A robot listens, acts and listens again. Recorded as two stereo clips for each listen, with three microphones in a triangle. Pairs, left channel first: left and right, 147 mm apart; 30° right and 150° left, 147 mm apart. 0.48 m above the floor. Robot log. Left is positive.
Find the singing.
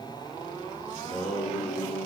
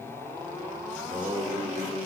note: The singing: 65° left.
cmd yaw +65
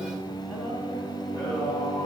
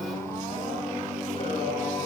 note: The singing is now 15° left.
cmd yaw +15
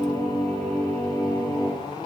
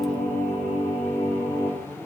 note: The singing is now 15° left.
cmd yaw +15
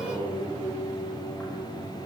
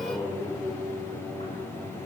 note: The singing is now 10° left.
cmd yaw +10
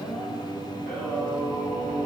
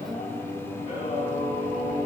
end: Found it: singing, straight ahead, 2 to 4 m away.